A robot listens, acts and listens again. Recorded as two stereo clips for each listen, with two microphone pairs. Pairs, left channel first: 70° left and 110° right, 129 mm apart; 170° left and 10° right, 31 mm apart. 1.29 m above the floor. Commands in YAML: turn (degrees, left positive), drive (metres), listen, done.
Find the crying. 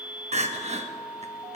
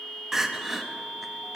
turn: -90
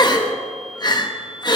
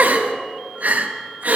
turn: 15
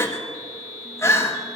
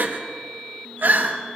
done: "Found it: crying, straight ahead, 1 to 2 m away."